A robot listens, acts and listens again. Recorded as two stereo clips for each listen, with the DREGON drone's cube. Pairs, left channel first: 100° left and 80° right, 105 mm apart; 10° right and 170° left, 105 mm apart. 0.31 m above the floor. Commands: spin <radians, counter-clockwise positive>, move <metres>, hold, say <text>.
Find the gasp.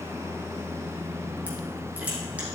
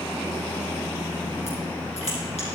hold
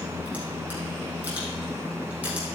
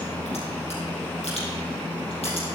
hold
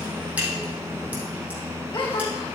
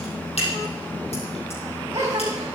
spin 2.01
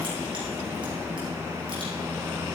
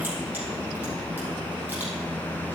say Facing where the gasp came from. I can't hear it now.